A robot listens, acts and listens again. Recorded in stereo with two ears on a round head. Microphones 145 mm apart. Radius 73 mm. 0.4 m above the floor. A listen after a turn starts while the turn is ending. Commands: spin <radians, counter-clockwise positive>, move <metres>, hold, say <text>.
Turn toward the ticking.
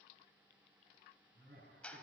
hold
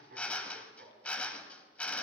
hold
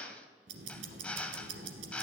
spin -1.57
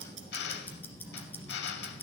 spin 0.17
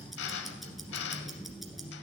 say Facing the ticking, 1 to 2 m away.